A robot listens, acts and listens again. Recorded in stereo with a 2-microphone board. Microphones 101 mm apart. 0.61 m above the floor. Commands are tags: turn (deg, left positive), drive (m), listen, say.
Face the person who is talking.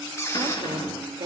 <turn deg="-50"/>
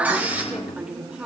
<turn deg="-10"/>
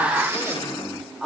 <say>Found it: a woman speaking, straight ahead, 2 to 4 m away.</say>